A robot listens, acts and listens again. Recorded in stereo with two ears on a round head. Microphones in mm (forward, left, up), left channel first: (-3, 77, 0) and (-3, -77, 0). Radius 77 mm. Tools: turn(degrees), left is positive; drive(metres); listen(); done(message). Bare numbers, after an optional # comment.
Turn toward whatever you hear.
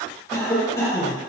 # The cough: about 15° left or 165° left.
turn(15)
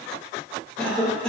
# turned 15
done("Facing the cough.")